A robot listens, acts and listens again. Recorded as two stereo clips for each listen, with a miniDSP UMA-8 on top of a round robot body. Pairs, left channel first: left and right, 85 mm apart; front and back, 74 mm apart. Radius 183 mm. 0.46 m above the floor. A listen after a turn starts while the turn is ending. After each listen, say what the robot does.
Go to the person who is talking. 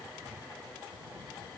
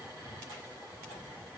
Keep listening.
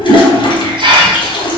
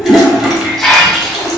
Keep listening.
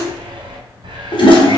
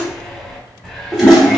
I can't make out anyone speaking to turn to.